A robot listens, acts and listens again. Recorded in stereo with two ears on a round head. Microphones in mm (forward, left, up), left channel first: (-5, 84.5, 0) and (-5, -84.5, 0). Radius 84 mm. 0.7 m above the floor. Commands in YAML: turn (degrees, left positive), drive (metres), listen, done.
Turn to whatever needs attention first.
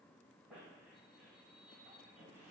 listen: true
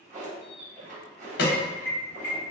turn: 60
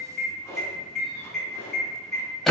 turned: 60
done: "Found it: an alarm, straight ahead, under 1 m away."